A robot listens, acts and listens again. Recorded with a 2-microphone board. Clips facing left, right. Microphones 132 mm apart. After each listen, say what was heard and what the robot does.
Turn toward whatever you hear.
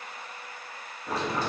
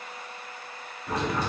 The boiling: about 30° left or 150° left. Turn 30° left.
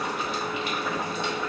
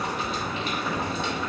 Found it: boiling, straight ahead, 1 to 2 m away.